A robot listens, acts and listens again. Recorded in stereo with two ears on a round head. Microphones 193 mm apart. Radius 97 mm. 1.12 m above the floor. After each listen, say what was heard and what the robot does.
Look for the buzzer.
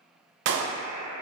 The buzzer: about 65° left or 115° left. Turn 65° left.
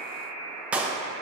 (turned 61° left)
So it is at 10° left. Turn 10° left.
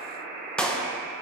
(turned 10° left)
Facing the buzzer.